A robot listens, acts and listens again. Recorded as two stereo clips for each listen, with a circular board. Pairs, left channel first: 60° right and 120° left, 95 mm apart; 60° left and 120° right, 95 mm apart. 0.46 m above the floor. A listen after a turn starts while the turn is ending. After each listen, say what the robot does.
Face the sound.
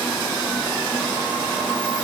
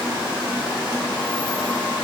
Keep listening.
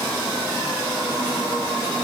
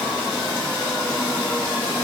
Keep listening.
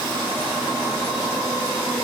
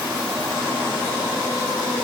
I can't make out anything to turn to.